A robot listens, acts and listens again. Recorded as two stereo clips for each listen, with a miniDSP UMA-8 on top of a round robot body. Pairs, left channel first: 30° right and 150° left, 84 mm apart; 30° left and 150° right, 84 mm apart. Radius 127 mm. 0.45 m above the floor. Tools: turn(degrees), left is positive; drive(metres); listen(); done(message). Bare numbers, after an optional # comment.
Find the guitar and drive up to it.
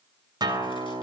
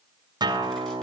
# The guitar: straight behind.
turn(180)
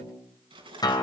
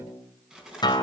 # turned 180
drive(1.0)
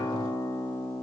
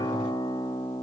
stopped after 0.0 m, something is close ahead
done("Blocked. The guitar is further on, straight ahead.")